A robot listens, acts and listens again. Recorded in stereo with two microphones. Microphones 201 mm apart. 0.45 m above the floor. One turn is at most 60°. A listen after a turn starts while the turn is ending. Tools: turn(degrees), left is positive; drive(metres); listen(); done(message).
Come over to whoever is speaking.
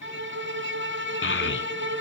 turn(degrees=60)
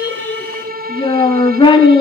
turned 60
turn(degrees=25)
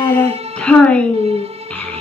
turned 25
drive(metres=1.0)
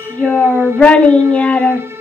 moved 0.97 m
drive(metres=1.0)
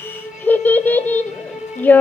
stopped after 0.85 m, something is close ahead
turn(degrees=10)
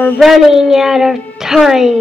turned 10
done("I am next to the child speaking.")